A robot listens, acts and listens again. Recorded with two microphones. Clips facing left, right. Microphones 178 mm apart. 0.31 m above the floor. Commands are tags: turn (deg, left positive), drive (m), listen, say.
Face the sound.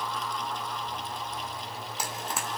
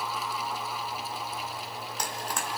<turn deg="30"/>
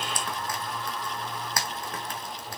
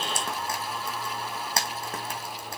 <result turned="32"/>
<turn deg="-25"/>
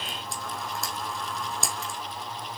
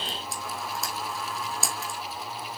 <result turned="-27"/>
<say>Facing the frying, 2 to 4 m away.</say>